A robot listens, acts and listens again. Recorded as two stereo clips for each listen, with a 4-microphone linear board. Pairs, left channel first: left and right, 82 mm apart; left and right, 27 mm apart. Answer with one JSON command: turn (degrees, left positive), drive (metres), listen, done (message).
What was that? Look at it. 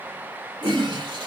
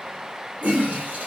{"turn": -90}
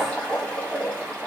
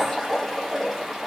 {"turn": 15}
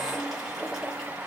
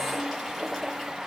{"done": "Facing the toilet flushing, 1 to 2 m away."}